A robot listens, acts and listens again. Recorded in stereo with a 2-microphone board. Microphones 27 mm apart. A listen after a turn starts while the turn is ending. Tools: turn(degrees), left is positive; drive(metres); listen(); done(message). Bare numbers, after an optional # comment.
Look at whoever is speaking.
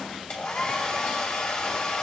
listen()
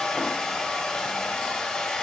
listen()
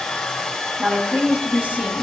turn(-90)
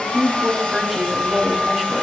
# So it is at 10° left.
turn(10)
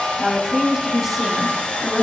done("Facing the woman speaking.")